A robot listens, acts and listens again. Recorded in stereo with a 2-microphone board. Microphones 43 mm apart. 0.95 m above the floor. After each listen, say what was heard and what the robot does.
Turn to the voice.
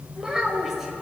Turn 30° right.
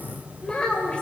So it is at 30° left. Turn 30° left.
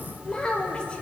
The child speaking is now 20° left. Turn 20° left.
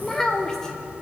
The child speaking is now 10° left. Turn 10° left.
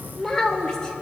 The child speaking is now 20° left. Turn 20° left.
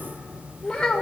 The child speaking is now 20° left. Turn 20° left.
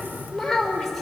Found it: a child speaking, straight ahead, 1 to 2 m away.